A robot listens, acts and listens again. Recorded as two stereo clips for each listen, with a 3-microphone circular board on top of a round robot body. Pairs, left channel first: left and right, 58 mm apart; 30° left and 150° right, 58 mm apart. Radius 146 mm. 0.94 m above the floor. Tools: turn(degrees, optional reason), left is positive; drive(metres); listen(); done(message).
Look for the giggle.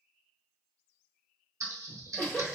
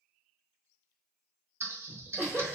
turn(degrees=165, reason="The giggle: 165° left.")
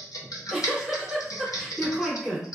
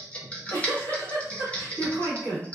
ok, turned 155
turn(degrees=10, reason="The giggle is now 10° left.")
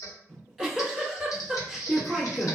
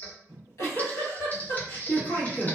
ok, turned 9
done("Facing the giggle.")